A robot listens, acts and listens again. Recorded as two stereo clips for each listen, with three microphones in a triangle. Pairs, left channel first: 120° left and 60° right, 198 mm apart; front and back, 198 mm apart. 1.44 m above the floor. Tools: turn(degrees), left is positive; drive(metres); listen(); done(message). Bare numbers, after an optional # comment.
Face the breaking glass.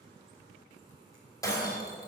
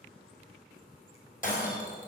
# The breaking glass: 45° left.
turn(45)
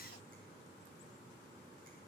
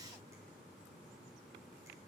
done("I heard breaking glass from this way, but can't make it out now.")